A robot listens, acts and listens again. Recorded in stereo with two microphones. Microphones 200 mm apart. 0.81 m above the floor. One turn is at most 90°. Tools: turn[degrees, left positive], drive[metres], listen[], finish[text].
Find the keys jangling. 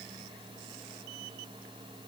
Action: listen[]
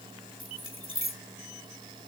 Action: turn[90]
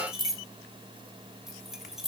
Action: finish[Facing the keys jangling, 1 to 2 m away.]